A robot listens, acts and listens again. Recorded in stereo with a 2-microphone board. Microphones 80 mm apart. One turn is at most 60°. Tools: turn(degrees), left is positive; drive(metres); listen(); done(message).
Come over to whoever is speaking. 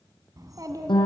turn(degrees=-50)
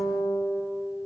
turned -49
listen()
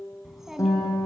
drive(metres=1.0)
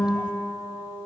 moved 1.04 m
listen()
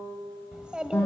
turn(degrees=-15)
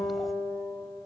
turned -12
listen()
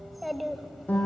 drive(metres=1.0)
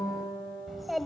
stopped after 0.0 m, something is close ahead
done("Arrived at the child speaking, straight ahead.")